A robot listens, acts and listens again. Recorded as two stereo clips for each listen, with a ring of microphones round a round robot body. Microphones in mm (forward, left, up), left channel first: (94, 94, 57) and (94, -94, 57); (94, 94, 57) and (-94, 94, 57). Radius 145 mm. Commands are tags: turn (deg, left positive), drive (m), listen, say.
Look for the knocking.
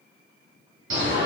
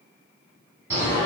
<listen/>
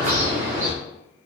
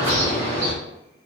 <listen/>
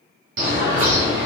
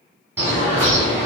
<say>I can't make out knocking to turn to.</say>